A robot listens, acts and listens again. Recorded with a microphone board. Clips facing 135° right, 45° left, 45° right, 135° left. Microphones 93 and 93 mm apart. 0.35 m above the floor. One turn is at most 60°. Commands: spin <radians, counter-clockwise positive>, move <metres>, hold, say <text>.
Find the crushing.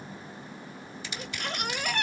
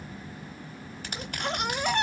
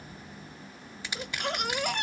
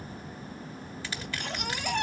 spin 0.44
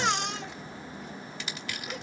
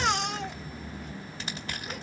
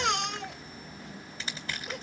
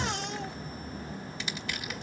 say Found it: crushing, straight ahead, 2 to 4 m away.